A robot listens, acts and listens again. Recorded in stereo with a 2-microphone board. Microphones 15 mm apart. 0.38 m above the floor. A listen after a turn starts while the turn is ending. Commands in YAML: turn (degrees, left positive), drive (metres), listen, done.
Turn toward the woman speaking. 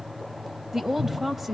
turn: -20
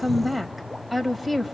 done: "Facing the woman speaking."